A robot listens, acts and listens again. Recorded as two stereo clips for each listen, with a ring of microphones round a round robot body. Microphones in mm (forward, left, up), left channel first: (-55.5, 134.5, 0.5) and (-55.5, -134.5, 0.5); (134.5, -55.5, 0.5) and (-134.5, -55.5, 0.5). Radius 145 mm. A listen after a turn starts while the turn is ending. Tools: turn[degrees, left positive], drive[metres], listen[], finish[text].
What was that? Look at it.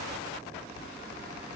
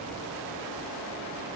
Action: listen[]
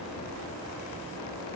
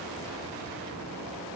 Action: listen[]
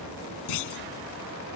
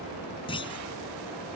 Thought: The clunk: 75° left.
Action: turn[75]
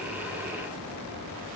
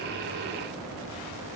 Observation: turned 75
Action: finish[Facing where the clunk came from. I can't hear it now.]